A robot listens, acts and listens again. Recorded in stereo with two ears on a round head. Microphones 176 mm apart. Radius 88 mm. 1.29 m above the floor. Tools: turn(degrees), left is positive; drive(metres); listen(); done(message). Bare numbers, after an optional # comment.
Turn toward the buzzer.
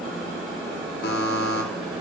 # The buzzer: about 55° left or 125° left.
turn(55)
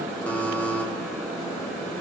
# So it is at 10° left.
turn(10)
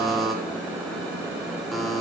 done("Found it: a buzzer, straight ahead.")